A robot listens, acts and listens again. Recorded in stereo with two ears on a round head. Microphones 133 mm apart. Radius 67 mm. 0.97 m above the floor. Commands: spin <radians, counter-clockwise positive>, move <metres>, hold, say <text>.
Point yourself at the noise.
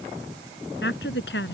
spin 1.57
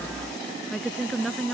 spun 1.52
say Found it: a woman speaking, straight ahead.